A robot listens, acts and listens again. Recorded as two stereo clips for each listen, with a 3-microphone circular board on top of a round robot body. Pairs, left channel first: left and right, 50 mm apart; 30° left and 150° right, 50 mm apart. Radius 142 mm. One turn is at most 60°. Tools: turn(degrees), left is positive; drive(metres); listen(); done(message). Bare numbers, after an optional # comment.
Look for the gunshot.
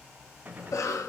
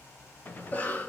# The gunshot: 25° right.
turn(-25)
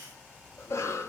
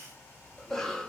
done("I heard a gunshot from this way, but can't make it out now.")